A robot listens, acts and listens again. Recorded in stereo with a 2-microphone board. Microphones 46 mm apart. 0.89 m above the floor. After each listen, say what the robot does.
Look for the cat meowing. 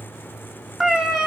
Turn 30° right.
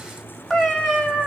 Turn 30° right.
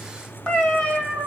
Turn 10° left.
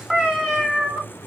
Facing the cat meowing.